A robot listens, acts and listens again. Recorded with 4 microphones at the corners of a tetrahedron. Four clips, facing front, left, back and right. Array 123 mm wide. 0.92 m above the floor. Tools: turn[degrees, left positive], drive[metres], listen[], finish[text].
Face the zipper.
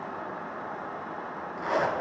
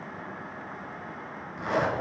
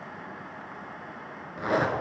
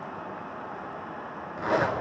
Thought: The zipper: 135° right.
Action: turn[-135]
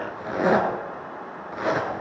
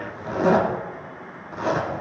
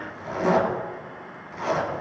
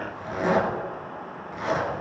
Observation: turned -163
Thought: The zipper is now 25° left.
Action: turn[25]
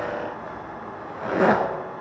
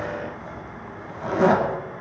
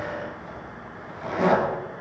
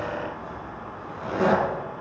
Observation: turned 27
Action: finish[Facing the zipper.]